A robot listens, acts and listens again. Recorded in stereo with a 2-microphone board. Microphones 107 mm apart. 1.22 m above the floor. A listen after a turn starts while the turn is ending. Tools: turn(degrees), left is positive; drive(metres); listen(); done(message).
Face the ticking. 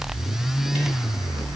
listen()
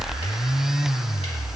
listen()
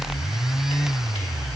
done("I can't make out ticking.")